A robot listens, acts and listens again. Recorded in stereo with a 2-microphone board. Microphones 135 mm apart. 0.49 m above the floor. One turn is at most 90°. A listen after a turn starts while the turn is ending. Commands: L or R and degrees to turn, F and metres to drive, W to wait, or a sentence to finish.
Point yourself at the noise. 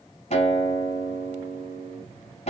L55
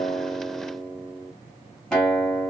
Found it: a guitar, straight ahead, 2 to 4 m away.